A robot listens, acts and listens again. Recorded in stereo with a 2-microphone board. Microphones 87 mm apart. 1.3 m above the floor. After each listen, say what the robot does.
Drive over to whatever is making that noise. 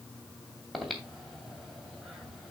Turn 30° left.
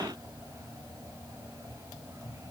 Turn 30° right.
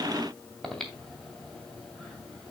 Drive 1.0 m forward.
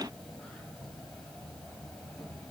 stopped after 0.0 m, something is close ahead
Blocked. The breathing is further on, straight ahead.